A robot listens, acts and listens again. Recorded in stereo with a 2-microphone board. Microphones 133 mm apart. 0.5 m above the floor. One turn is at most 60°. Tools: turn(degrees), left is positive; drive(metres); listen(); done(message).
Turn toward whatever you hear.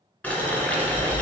turn(degrees=30)
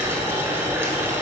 turn(degrees=-20)
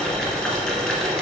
done("Facing the boiling, 1 to 2 m away.")